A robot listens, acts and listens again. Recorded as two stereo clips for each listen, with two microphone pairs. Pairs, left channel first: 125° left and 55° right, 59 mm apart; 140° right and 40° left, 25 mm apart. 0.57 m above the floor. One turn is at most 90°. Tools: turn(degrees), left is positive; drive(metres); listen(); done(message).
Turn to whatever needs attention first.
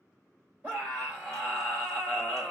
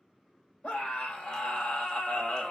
turn(degrees=-90)
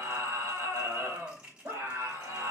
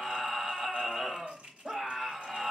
turn(degrees=-20)
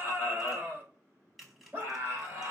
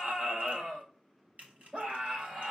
done("Found it: a scream, straight ahead, 2 to 4 m away.")